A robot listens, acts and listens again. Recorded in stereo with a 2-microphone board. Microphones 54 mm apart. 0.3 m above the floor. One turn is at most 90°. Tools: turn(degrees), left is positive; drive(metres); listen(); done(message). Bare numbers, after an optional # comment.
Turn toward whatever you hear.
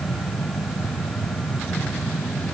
listen()
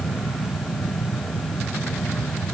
listen()
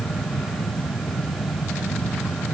done("I can't make out anything to turn to.")